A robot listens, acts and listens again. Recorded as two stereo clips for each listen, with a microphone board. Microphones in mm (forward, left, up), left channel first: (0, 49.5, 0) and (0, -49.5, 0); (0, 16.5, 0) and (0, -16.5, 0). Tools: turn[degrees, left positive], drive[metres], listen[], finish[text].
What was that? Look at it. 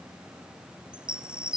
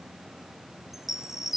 Action: turn[-30]
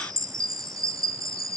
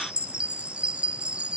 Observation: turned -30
Thought: So it is at 135° right.
Action: turn[-135]
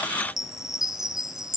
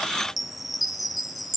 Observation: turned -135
Action: finish[Facing the chime.]